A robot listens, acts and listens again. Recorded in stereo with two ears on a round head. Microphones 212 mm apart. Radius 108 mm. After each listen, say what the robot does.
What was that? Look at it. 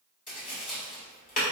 Turn 35° left.
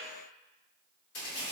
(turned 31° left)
Turn 115° left.
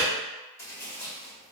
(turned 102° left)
Turn 15° left.
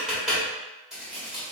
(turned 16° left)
Facing the tapping, 1 to 2 m away.